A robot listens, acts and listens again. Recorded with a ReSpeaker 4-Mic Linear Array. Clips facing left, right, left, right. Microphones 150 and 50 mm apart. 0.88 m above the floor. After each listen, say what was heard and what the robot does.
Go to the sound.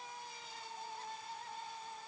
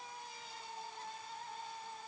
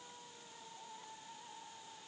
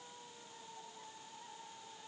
Keep listening.
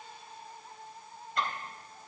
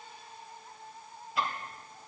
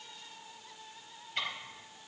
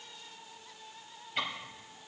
Turn 30° right.
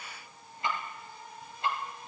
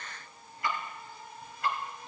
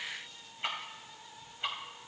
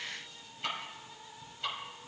So it is at 25° left. Turn 25° left.
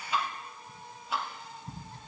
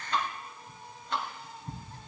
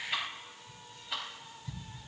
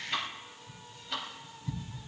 Drive 1.0 m forward.
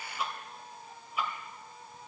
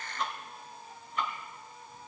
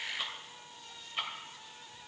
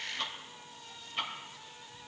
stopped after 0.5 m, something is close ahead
The ticking is now 10° left. Turn 10° left.
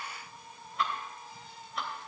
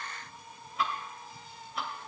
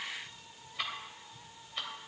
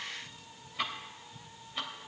Something is in my way. I am facing the ticking but have not reached it.